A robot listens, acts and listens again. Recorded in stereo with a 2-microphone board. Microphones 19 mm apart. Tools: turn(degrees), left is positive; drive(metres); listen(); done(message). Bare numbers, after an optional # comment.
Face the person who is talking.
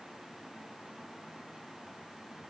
listen()
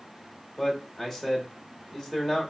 turn(30)
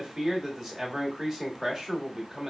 # So it is at 20° right.
turn(-20)
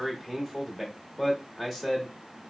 done("Facing the man speaking, 1 to 2 m away.")